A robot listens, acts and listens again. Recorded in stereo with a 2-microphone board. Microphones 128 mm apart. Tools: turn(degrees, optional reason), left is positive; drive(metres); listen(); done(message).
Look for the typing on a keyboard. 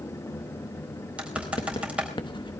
turn(degrees=-30)
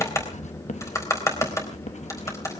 turn(degrees=25, reason="So it is at 25° left.")
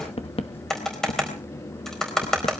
done("Found it: typing on a keyboard, straight ahead, over 4 m away.")